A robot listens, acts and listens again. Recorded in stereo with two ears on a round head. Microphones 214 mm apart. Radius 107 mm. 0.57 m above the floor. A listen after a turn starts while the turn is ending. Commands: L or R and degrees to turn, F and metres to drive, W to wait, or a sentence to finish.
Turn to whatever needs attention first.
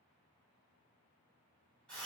W
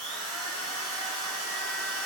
W
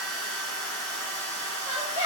L50
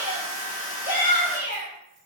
L70
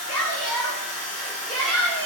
Found it: a shout, straight ahead, 1 to 2 m away.